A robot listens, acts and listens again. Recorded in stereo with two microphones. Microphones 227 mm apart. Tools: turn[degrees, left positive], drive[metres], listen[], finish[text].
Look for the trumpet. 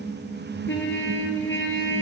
Thought: The trumpet: about 60° left or 120° left.
Action: turn[60]
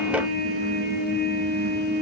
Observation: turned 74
Thought: So it is at 45° left.
Action: turn[45]
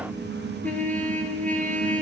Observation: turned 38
Action: finish[Found it: a trumpet, straight ahead, 1 to 2 m away.]